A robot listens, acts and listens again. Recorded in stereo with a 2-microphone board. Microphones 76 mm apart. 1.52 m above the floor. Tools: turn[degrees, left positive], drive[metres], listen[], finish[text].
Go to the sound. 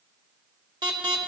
Thought: The alarm: about 65° right or 115° right.
Action: turn[-65]
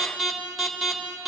Action: drive[1.0]
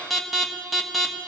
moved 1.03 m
Action: drive[1.0]
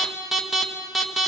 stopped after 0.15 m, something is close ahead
Action: finish[I am next to the alarm.]